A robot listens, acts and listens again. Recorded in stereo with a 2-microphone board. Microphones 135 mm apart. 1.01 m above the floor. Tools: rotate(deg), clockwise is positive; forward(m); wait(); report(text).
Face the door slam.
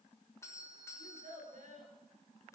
wait()
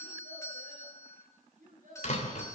rotate(-60)
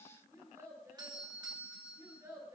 wait()
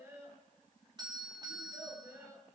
report("I heard a door slam, but can't make it out now. It was about straight ahead or 60° left.")